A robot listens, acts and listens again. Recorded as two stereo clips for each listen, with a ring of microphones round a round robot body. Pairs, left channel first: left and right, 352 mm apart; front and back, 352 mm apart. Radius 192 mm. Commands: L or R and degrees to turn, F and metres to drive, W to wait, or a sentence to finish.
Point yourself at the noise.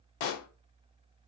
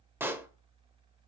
L95
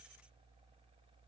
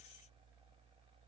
I heard a pop from this way, but can't make it out now.